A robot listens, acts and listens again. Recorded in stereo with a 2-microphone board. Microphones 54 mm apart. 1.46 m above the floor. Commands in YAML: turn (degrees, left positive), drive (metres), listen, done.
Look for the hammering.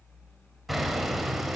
turn: 30
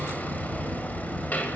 turn: 150
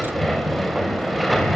done: "Found it: hammering, straight ahead."